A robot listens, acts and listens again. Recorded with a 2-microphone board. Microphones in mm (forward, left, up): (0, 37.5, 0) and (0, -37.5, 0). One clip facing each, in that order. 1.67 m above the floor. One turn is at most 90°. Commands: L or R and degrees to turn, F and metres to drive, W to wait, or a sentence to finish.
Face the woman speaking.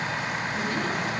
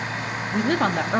R75
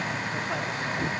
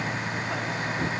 W
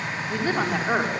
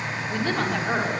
L15
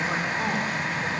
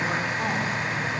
W
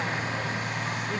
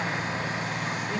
W
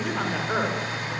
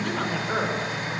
Facing the woman speaking, over 4 m away.